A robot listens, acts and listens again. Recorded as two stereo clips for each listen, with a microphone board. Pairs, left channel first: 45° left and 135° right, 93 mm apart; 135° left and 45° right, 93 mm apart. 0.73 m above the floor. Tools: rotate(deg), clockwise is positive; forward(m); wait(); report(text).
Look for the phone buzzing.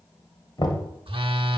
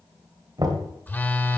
rotate(155)
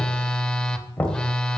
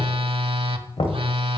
rotate(40)
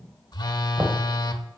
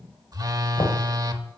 report("Found it: a phone buzzing, straight ahead, under 1 m away.")